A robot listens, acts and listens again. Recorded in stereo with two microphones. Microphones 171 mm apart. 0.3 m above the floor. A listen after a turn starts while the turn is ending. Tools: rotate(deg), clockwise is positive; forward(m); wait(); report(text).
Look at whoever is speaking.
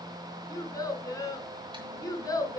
rotate(-20)
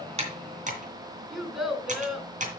report("Found it: a child speaking, straight ahead.")